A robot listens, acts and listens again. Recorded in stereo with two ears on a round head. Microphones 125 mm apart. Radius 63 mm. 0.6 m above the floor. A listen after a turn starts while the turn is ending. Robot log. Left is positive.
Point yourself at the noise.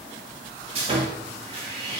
note: The sawing: about 45° right or 135° right.
cmd yaw -45
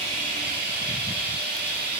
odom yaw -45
note: So it is at 85° right.
cmd yaw -85
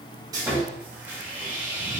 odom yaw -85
note: The sawing is now 15° right.
cmd yaw -15
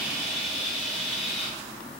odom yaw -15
end: Found it: sawing, straight ahead, 1 to 2 m away.